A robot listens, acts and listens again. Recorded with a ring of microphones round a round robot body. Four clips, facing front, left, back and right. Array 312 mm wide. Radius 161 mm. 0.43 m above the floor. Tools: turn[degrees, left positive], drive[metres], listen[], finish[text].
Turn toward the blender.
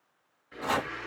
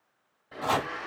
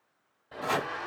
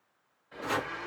Thought: The blender: 150° left.
Action: turn[150]
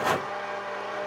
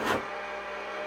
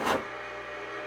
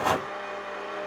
Thought: The blender is now 20° right.
Action: turn[-20]
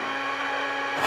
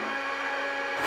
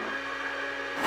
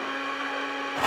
Action: finish[Facing the blender, 1 to 2 m away.]